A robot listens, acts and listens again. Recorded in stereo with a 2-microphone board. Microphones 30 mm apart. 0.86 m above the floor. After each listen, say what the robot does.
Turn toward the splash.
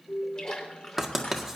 Turn 25° left.
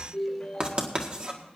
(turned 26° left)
Keep listening.
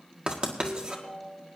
I heard a splash, but can't make it out now. It was about straight ahead or 125° left.